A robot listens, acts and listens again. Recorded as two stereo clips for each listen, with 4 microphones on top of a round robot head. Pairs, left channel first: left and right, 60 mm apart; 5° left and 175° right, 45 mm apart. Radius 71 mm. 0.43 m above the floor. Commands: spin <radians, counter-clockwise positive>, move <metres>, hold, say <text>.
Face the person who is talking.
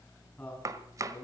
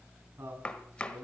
spin 2.71
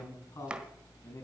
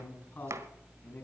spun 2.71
spin 0.96
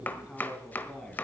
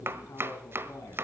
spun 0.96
spin 0.26
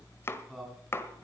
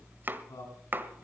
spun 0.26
say Found it: a man speaking, straight ahead.